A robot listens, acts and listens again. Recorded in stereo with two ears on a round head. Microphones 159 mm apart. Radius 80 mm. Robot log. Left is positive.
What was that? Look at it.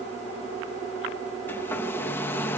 cmd yaw +30
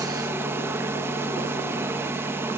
note: So it is at 15° right.
cmd yaw -15
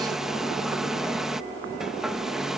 end: Facing the hair dryer.